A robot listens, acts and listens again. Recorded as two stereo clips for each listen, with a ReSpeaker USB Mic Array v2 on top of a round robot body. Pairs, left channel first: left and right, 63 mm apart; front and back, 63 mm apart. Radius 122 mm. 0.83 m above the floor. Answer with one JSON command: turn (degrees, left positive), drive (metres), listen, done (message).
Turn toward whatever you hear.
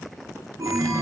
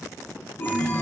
{"turn": -60}
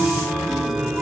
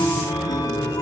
{"done": "Facing the chime."}